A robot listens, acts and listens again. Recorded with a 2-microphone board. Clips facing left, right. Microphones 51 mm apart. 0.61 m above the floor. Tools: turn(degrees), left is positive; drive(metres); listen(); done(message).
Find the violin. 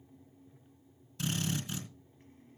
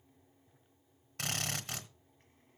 listen()
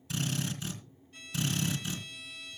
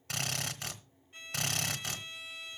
turn(degrees=-25)
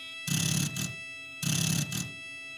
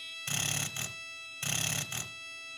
done("Facing the violin.")